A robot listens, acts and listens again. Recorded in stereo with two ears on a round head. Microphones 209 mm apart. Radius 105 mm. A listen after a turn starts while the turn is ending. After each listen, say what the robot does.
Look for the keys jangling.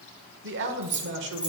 Turn 30° right.
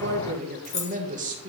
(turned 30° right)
Turn 30° left.
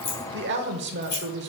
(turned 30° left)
Turn 40° left.
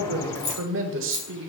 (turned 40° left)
Turn 30° left.
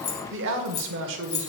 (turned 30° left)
Turn 45° left.
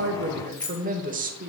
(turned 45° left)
Turn 10° left.
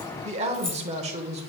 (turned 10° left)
Keep listening.
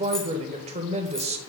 Keep listening.
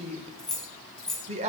Facing the keys jangling, 1 to 2 m away.